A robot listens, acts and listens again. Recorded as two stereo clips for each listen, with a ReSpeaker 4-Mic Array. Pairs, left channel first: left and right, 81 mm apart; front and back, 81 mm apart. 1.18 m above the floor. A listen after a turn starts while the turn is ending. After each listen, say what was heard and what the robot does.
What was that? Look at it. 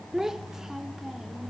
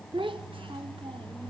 The child speaking: 175° right. Turn 175° right.
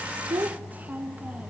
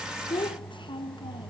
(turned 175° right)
The child speaking is now 20° right. Turn 20° right.
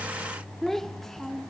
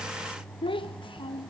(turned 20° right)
Facing the child speaking.